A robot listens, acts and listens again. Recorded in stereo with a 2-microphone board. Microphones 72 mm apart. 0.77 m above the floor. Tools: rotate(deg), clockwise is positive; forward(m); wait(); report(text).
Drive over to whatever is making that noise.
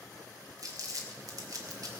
rotate(55)
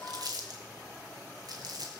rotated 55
rotate(70)
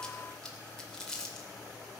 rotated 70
rotate(-10)
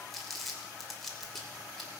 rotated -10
forward(1.0)
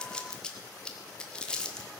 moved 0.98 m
rotate(-15)
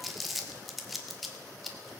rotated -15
forward(1.0)
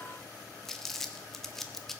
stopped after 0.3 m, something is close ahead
report("I am next to the crumpling.")